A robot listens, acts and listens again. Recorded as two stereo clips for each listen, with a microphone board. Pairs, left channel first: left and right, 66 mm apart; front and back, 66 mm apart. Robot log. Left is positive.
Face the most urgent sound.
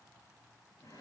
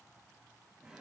cmd idle
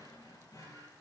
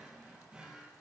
cmd idle
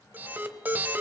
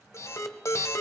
note: The alarm: 35° right.
cmd yaw -35
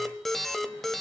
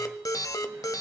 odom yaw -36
end: Facing the alarm, 1 to 2 m away.